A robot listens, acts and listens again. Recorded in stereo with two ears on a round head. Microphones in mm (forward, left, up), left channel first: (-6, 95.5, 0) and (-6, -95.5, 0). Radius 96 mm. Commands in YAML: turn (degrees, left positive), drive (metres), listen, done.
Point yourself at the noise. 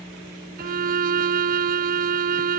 turn: -45
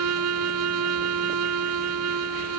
turn: -90
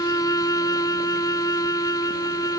turn: 15
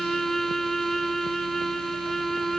done: "Found it: a violin, straight ahead."